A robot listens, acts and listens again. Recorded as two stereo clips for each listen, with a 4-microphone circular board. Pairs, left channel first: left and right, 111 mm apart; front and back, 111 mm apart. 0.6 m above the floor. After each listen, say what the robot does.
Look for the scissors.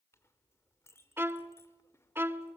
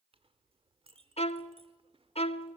Keep listening.
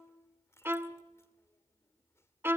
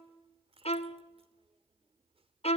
Keep listening.
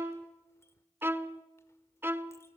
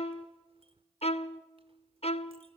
I can't make out scissors to turn to.